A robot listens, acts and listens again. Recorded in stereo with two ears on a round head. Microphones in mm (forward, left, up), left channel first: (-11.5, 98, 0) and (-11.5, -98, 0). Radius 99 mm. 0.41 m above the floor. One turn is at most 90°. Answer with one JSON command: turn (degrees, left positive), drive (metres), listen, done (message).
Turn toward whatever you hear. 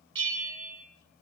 {"turn": -60}
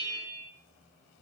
{"turn": -55}
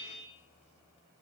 {"turn": 15}
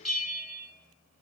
{"done": "Facing the bell."}